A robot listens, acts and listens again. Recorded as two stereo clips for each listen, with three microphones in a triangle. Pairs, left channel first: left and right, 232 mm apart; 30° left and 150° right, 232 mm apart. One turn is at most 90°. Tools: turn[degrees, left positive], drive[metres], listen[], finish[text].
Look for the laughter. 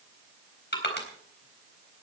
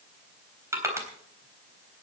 Action: listen[]
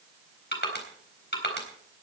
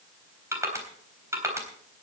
Action: listen[]
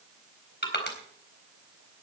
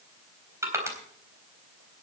Action: finish[I can't make out laughter to turn to.]